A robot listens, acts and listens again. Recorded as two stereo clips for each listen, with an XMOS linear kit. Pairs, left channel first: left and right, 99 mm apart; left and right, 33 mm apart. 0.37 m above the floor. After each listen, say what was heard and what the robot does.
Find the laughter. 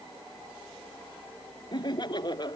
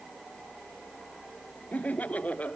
The laughter: about 50° left or 130° left. Turn 50° left.
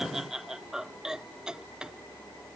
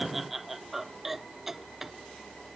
So it is at 10° right. Turn 10° right.
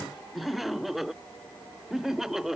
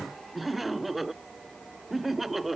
Found it: laughter, straight ahead.